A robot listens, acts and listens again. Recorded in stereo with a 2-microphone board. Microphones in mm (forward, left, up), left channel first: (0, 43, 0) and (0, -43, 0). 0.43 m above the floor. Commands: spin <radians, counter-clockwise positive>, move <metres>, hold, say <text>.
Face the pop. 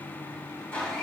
hold
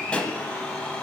spin 0.26
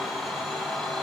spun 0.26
hold
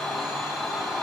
say I heard a pop, but can't make it out now. It was about straight ahead or 150° left.